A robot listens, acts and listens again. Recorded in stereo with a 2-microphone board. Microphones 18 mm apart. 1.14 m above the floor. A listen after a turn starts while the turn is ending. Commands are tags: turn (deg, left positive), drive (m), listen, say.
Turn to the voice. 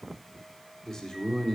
<turn deg="25"/>
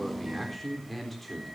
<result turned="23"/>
<say>Facing the man speaking, over 4 m away.</say>